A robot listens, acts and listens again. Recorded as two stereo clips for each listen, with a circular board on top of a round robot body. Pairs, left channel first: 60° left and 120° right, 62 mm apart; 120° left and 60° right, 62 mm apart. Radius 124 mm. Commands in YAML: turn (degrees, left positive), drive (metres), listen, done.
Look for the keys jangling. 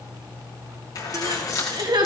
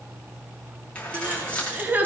turn: 50
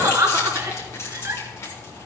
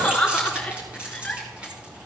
turn: 10
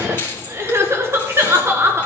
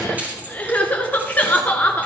done: "Facing the keys jangling."